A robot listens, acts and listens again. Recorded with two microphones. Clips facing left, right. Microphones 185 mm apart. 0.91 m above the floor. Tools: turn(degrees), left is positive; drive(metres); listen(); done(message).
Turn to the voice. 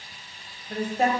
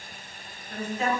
turn(degrees=55)
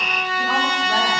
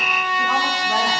listen()
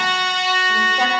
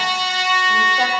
listen()
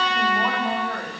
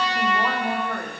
done("Found it: a woman speaking, straight ahead.")